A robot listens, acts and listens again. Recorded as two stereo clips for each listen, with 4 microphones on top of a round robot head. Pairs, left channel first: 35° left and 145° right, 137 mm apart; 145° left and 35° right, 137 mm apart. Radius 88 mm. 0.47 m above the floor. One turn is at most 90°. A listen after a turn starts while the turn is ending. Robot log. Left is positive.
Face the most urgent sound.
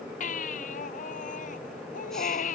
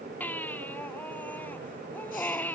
note: The baby crying: 65° left.
cmd yaw +65
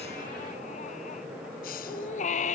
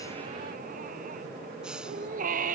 end: Found it: a baby crying, straight ahead.